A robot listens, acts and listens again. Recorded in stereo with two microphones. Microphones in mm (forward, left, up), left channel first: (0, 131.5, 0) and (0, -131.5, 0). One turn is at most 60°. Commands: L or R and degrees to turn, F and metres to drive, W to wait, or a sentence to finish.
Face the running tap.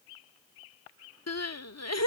W
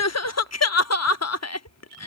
W
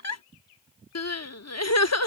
I can't make out a running tap, only crying.